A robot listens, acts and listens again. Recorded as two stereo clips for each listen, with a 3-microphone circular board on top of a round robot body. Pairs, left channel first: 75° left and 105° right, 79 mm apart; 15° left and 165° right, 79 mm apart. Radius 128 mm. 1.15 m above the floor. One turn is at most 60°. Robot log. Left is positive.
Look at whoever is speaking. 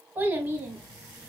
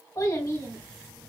note: The child speaking: 40° right.
cmd yaw -40
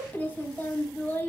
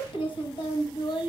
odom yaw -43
end: Found it: a child speaking, straight ahead.